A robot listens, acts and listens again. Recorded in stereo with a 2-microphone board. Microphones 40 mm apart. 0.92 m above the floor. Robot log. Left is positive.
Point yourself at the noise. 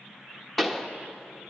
cmd yaw +30
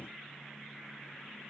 cmd idle
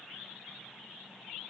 end: I heard a pop, but can't make it out now. It was about 25° right or 145° left.